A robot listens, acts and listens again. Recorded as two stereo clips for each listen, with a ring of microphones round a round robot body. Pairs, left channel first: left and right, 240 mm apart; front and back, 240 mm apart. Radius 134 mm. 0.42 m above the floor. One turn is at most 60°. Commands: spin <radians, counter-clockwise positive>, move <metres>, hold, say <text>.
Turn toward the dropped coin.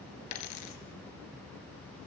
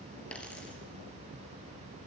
spin 1.05
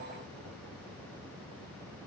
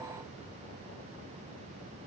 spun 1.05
spin 0.44
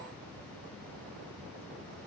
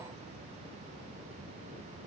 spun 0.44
say Facing where the dropped coin came from. I can't hear it now.